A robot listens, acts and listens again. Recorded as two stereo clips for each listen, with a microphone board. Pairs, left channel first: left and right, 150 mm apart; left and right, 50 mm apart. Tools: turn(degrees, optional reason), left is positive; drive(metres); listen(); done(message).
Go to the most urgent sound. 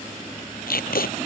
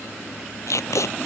listen()
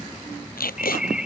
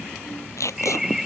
turn(degrees=-30)
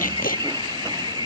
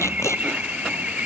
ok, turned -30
turn(degrees=-145, reason="So it is at 145° right.")
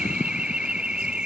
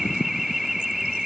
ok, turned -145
turn(degrees=-10, reason="The alarm is now 10° right.")
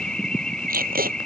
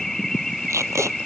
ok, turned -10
drive(metres=1.0)
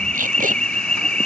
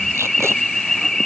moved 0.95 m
turn(degrees=10, reason="The alarm is now 10° left.")
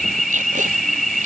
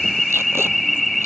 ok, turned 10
drive(metres=1.0)
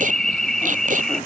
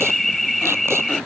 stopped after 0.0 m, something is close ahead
done("Arrived at the alarm, straight ahead.")